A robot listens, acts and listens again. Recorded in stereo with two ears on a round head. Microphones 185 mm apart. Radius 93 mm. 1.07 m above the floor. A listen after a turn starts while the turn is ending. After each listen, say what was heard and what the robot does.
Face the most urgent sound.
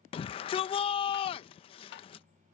The shout: about 25° left or 155° left. Turn 25° left.
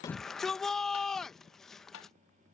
Found it: a shout, straight ahead.